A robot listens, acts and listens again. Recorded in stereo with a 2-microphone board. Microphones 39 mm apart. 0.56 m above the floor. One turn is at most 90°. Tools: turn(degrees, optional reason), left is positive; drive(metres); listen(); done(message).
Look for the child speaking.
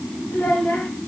turn(degrees=60, reason="The child speaking: about 60° left or 120° left.")
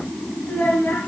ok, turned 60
turn(degrees=55, reason="So it is at 55° left.")
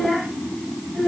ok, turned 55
done("Found it: a child speaking, straight ahead.")